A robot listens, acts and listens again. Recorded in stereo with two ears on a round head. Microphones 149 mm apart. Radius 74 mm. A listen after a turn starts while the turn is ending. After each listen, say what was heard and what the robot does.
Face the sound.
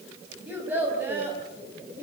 Turn 30° right.
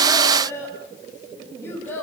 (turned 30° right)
So it is at 15° left. Turn 15° left.
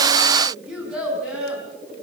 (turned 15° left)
Facing the child speaking, over 4 m away.